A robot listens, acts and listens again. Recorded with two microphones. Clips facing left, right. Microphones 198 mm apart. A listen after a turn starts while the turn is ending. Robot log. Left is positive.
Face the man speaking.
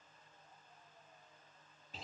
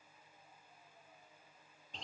cmd idle
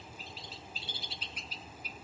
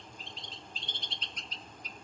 cmd idle
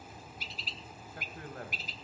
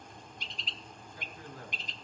cmd yaw +90
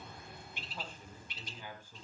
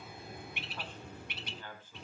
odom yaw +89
note: So it is at 15° left.
cmd yaw +15
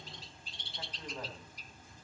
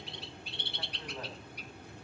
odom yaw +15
cmd idle
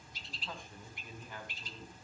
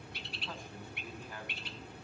end: Found it: a man speaking, straight ahead.